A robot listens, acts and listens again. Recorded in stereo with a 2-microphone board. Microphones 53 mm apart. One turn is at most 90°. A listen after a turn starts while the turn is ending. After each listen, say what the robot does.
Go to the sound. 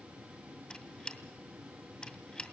Turn 20° left.
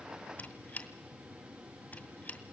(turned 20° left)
Turn 90° left.
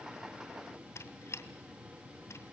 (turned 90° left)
Turn 65° left.
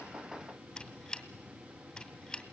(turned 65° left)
Turn 10° left.
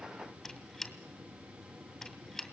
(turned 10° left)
Drive 1.0 m forward.
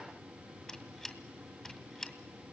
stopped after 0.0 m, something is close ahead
Something is in my way. I am facing the squeak but have not reached it.